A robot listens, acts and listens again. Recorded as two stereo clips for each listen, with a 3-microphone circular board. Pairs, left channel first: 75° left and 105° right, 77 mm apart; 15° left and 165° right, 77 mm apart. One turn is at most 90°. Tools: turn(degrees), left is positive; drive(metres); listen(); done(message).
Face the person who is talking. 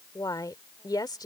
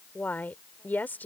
turn(degrees=80)
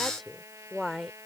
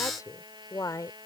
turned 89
turn(degrees=-15)
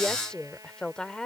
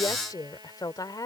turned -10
done("Found it: a woman speaking, straight ahead.")